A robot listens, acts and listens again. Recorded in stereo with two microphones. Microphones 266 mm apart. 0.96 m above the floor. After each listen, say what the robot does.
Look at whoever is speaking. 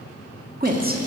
Turn 35° right.
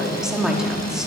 Found it: a woman speaking, straight ahead.